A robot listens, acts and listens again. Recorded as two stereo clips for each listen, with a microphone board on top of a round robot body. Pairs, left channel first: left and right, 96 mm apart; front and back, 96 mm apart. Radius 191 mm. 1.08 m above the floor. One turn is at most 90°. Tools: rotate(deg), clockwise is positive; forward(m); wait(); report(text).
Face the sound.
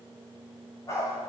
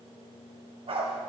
rotate(-90)
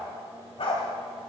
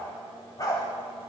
rotate(-55)
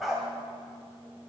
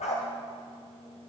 report("Facing the dog barking.")